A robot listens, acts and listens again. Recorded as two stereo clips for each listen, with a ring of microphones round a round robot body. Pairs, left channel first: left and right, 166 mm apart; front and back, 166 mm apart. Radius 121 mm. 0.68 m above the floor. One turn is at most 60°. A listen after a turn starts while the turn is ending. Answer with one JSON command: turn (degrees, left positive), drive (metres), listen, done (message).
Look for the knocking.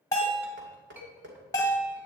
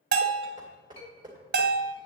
{"turn": -60}
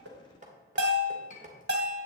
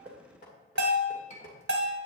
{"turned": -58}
{"turn": -50}
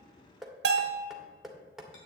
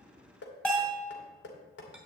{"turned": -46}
{"done": "Facing the knocking, 1 to 2 m away."}